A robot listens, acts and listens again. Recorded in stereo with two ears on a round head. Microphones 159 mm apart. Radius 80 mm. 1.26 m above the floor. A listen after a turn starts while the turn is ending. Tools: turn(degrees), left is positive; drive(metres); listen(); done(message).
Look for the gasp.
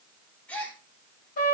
turn(degrees=30)
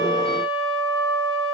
listen()
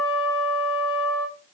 done("I heard a gasp, but can't make it out now. It was about 20° right or 140° left.")